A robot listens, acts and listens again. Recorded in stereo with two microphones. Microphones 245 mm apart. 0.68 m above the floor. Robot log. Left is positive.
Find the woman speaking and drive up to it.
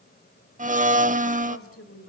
note: The woman speaking: about 65° left or 115° left.
cmd yaw +65
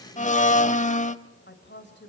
note: So it is at 50° left.
cmd yaw +50
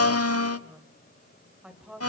cmd fwd 1.0
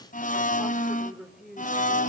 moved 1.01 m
cmd fwd 1.0
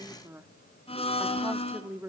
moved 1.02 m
note: The woman speaking is now 10° right.
cmd yaw -10
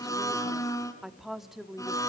cmd fwd 1.0
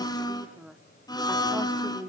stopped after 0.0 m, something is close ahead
end: Arrived at the woman speaking, straight ahead.